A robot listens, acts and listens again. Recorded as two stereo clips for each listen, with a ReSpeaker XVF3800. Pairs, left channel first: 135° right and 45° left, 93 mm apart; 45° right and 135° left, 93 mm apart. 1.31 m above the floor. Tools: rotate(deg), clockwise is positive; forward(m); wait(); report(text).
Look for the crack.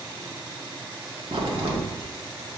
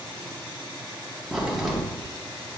rotate(-50)
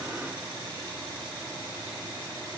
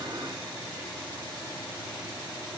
report("Facing where the crack came from. I can't hear it now.")